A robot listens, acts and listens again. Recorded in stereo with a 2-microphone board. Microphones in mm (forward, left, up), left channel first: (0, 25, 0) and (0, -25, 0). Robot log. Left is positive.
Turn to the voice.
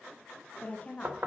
note: The woman speaking: about 30° left or 150° left.
cmd yaw +30
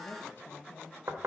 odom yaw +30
note: So it is at 115° left.
cmd yaw +115
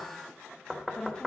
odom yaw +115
note: The woman speaking is now 20° left.
cmd yaw +20
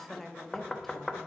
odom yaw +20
end: Found it: a woman speaking, straight ahead, 1 to 2 m away.